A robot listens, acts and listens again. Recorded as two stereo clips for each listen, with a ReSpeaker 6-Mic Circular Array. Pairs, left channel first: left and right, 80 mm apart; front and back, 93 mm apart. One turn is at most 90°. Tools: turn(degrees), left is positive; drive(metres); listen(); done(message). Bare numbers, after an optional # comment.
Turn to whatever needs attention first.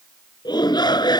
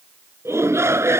# The shout: 120° left.
turn(90)
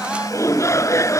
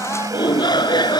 # The shout is now 40° left.
turn(40)
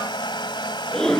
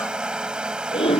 # The shout is now 10° left.
turn(10)
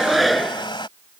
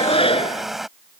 done("Facing the shout.")